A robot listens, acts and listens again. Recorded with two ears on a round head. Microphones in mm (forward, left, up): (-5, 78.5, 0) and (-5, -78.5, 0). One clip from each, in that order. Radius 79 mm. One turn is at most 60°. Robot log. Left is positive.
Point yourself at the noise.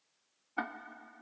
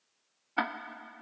note: The ticking: about 65° right or 115° right.
cmd yaw -60
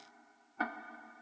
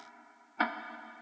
note: So it is at 55° right.
cmd yaw -55
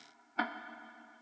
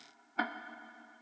note: The ticking is now 10° left.
cmd yaw +10
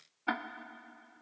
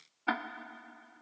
end: Found it: ticking, straight ahead.